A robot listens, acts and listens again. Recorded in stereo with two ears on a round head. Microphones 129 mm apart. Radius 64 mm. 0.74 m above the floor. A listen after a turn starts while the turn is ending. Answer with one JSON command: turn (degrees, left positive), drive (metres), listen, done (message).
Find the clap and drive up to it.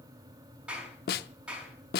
{"turn": -30}
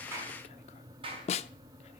{"turn": -140}
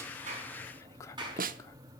{"turn": -30}
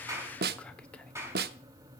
{"turn": -20}
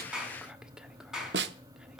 {"drive": 1.0}
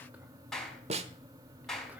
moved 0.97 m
{"drive": 1.0}
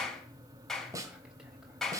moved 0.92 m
{"drive": 1.0}
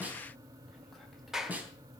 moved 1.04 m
{"drive": 1.0}
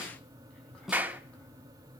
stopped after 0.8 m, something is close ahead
{"turn": -10}
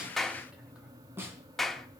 {"done": "Arrived at the clap, straight ahead."}